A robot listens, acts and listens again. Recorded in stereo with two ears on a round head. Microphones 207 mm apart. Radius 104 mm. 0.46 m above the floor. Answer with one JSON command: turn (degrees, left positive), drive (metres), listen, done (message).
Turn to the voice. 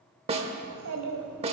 {"turn": -75}
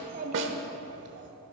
{"turn": -50}
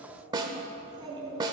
{"turn": -20}
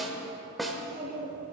{"done": "Found it: a child speaking, straight ahead, 2 to 4 m away."}